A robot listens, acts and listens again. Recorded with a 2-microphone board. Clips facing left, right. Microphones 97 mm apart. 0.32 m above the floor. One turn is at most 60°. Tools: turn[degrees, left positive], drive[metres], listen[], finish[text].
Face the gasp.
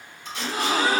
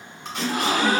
Thought: The gasp: about 75° right or 105° right.
Action: turn[-60]
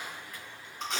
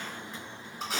Action: listen[]
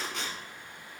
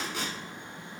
Action: finish[I heard a gasp, but can't make it out now. It was about 15° right or 45° right.]